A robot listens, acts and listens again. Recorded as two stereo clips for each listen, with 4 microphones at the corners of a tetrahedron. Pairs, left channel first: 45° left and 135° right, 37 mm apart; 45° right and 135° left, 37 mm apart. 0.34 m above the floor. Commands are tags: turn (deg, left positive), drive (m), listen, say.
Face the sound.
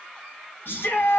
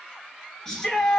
<turn deg="30"/>
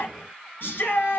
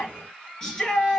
<turn deg="30"/>
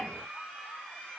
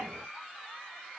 <listen/>
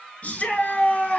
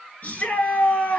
<say>Found it: a shout, straight ahead, over 4 m away.</say>